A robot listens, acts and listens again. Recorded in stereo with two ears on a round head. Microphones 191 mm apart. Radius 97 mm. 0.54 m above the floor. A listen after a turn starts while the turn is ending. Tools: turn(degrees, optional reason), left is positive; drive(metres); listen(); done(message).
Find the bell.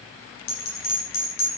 turn(degrees=45, reason="The bell: about 45° left or 135° left.")
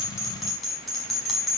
done("Found it: a bell, straight ahead, over 4 m away.")